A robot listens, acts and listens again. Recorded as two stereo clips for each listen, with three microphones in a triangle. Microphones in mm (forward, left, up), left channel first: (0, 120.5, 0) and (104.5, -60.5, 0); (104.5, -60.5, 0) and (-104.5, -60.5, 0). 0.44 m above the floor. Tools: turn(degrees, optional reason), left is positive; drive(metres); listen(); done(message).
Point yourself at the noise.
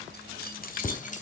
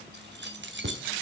turn(degrees=165, reason="The keys jangling: 165° left.")
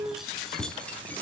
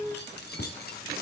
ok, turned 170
turn(degrees=35, reason="The keys jangling is now 35° left.")
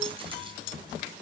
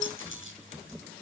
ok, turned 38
listen()
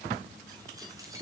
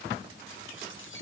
turn(degrees=15, reason="The keys jangling is now 15° left.")
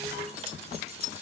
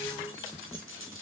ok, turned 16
listen()
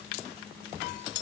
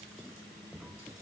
listen()
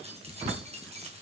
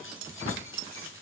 done("Facing the keys jangling, over 4 m away.")